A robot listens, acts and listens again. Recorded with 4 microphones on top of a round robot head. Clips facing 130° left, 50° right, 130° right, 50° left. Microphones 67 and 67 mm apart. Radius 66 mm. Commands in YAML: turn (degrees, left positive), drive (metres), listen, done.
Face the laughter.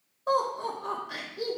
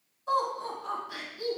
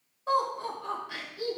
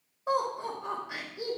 turn: 115
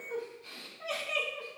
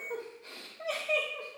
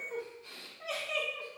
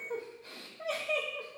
done: "Facing the laughter, 2 to 4 m away."